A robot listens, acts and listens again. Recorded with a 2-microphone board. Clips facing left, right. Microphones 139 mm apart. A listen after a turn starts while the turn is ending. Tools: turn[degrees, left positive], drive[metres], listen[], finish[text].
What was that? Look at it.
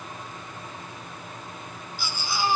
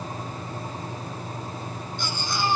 Action: turn[30]
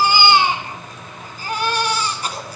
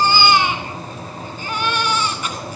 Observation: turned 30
Thought: So it is at 140° left.
Action: turn[140]
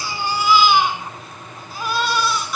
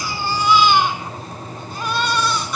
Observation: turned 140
Action: finish[Facing the baby crying, 2 to 4 m away.]